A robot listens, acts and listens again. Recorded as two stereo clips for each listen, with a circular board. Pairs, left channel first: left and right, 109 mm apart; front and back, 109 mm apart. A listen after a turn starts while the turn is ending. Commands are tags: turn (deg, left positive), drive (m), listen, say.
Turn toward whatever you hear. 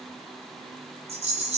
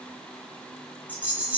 <turn deg="-105"/>
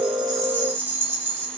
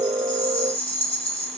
<turn deg="-20"/>
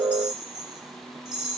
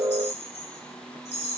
<say>Found it: a rattle, straight ahead.</say>